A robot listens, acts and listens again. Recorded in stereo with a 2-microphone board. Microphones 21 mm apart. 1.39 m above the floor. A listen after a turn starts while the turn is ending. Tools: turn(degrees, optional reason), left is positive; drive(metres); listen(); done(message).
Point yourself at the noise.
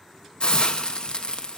turn(degrees=45, reason="The hiss: about 45° left or 135° left.")
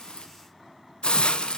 turn(degrees=75, reason="So it is at 75° left.")
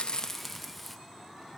done("Found it: a hiss, straight ahead.")